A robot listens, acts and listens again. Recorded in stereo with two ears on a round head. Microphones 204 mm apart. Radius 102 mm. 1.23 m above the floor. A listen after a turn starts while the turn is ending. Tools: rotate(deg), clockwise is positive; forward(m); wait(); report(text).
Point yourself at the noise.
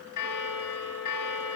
rotate(-90)
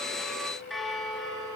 report("Facing the bell, 2 to 4 m away.")